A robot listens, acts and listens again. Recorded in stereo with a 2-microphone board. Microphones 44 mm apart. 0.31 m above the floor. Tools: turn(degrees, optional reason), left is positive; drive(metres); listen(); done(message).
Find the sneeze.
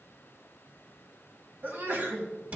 turn(degrees=-45, reason="The sneeze: about 45° right or 135° right.")
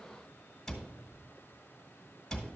listen()
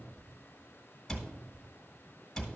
done("I heard a sneeze, but can't make it out now. It was about straight ahead or 90° right.")